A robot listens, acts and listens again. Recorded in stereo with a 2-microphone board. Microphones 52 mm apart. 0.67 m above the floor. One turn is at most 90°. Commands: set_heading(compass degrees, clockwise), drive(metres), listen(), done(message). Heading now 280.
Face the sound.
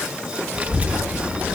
set_heading(310)
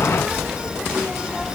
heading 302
set_heading(312)
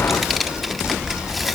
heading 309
done("Facing the child speaking.")